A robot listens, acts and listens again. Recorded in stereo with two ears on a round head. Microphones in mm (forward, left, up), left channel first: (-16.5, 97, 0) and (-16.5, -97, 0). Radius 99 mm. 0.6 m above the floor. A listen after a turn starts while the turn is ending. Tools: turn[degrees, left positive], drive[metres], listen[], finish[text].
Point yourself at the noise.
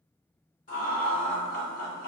Thought: The laughter: about 45° left or 135° left.
Action: turn[45]
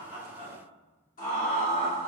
Thought: So it is at 25° left.
Action: turn[25]
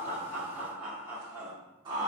Thought: The laughter is now 20° right.
Action: turn[-20]
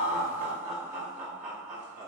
Thought: The laughter is now 10° right.
Action: turn[-10]
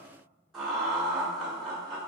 Action: finish[Found it: laughter, straight ahead.]